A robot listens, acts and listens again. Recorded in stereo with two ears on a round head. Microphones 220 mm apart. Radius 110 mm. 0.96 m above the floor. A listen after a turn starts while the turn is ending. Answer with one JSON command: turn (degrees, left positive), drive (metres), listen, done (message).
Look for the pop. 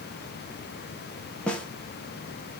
{"listen": true}
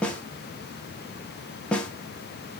{"listen": true}
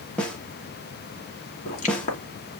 {"turn": 30}
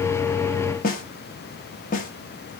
{"listen": true}
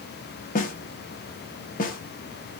{"done": "I heard a pop, but can't make it out now. It was about straight ahead or 120° left."}